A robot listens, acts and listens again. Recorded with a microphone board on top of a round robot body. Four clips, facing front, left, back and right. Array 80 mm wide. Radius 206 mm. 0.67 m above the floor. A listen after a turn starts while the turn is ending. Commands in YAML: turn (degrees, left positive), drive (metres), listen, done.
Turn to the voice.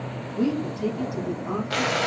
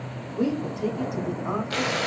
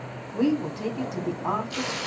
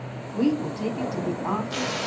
turn: -145
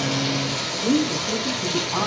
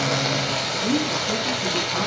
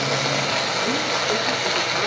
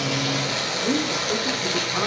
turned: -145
listen: true
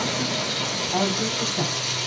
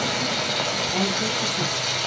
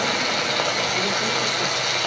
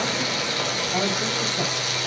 listen: true
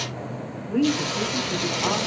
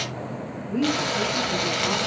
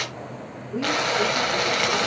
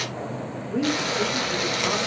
turn: 10
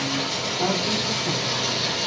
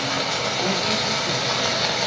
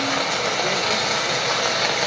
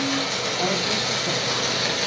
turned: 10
listen: true
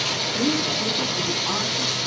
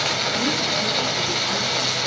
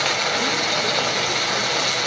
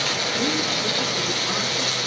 listen: true
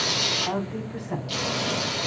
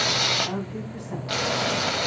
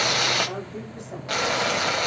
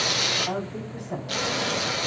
done: "Found it: a woman speaking, straight ahead."